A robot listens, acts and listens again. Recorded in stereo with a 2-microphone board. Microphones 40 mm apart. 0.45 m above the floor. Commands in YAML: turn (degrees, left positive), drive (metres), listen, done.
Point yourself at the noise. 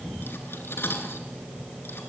turn: 70
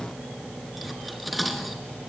done: "Found it: cutlery clinking, straight ahead, 2 to 4 m away."